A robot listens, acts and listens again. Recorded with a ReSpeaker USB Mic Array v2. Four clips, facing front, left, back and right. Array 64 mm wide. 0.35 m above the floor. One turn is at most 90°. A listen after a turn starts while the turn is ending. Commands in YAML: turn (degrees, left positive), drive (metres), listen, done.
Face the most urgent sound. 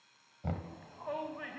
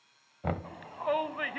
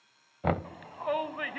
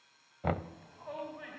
turn: 90
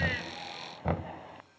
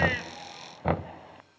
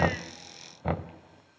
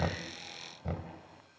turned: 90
turn: 35
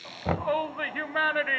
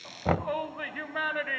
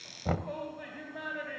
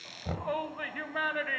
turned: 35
done: "Found it: a shout, straight ahead."